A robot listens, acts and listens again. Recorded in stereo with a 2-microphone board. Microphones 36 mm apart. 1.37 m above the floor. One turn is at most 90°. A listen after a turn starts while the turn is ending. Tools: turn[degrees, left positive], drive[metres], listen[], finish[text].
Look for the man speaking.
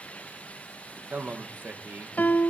Thought: The man speaking: about 60° right or 120° right.
Action: turn[-60]
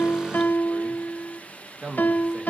Thought: So it is at 35° right.
Action: turn[-35]
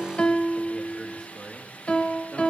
Thought: The man speaking is now 15° left.
Action: turn[15]
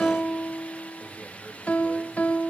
Action: listen[]
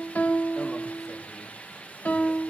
Action: listen[]
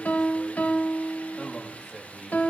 Action: finish[Facing the man speaking.]